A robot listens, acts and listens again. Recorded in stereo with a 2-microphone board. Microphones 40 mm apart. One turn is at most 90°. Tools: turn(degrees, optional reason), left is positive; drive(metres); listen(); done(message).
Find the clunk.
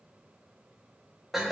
listen()
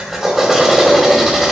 listen()
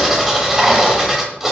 done("I can't make out a clunk to turn to.")